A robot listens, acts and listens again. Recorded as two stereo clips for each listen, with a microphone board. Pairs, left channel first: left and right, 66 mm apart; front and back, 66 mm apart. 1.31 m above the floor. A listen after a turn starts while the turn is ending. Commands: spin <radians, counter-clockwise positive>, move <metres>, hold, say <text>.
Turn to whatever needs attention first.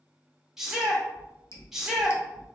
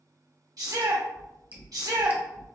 spin -3.05
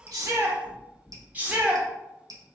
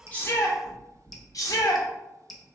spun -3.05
spin -0.44
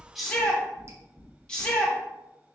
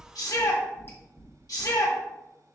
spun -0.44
spin 0.17
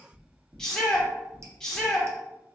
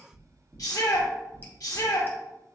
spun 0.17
spin 0.17
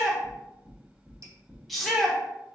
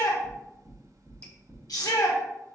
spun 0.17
say Found it: a shout, straight ahead, 1 to 2 m away.